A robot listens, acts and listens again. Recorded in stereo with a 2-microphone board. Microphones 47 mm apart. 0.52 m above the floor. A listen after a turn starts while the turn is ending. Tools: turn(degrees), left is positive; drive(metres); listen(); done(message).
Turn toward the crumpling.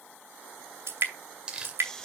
turn(degrees=-20)
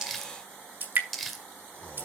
done("Found it: crumpling, straight ahead.")